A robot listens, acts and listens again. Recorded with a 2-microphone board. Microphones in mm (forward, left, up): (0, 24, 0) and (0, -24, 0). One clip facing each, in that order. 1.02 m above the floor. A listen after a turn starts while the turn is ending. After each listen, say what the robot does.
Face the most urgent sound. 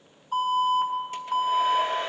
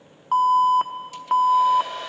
Turn 65° right.
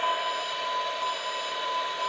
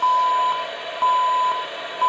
Turn 45° right.
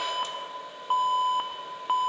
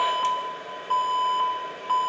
Turn 15° left.
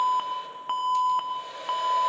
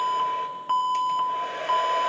Found it: an alarm, straight ahead, under 1 m away.